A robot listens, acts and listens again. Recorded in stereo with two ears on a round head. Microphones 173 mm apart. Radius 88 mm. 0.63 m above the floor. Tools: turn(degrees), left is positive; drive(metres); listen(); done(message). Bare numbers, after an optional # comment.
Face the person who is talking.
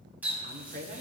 # The woman speaking: about 40° right or 140° right.
turn(-40)
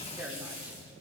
# So it is at 10° right.
turn(-10)
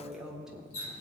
done("Facing the woman speaking, 1 to 2 m away.")